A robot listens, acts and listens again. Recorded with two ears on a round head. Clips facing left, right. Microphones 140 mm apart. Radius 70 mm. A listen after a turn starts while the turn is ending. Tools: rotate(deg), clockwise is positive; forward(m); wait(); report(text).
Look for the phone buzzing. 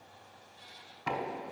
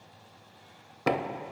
wait()
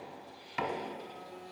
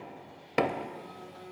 rotate(-30)
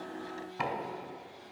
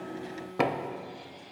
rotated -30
rotate(20)
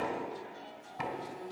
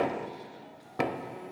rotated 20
rotate(10)
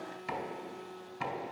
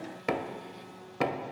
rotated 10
report("Found it: a phone buzzing, straight ahead.")